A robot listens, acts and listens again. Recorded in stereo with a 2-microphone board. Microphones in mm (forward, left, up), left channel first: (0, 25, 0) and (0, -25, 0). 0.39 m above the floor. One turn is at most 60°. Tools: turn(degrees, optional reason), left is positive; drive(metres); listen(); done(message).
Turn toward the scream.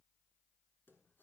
listen()
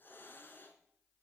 listen()
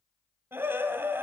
turn(degrees=-50, reason="The scream: about 50° right or 130° right.")
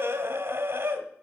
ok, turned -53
turn(degrees=-60, reason="So it is at 65° right.")
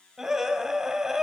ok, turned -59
turn(degrees=-10, reason="The scream is now 10° right.")
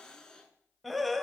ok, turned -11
done("Facing the scream.")